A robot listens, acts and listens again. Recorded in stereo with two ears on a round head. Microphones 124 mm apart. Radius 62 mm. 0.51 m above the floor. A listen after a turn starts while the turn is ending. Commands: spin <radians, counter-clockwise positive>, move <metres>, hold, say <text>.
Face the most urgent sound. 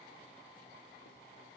hold
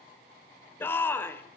spin 0.26
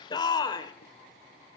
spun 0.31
spin 2.62
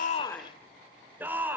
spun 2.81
spin -0.26
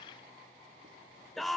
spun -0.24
say Found it: a shout, straight ahead.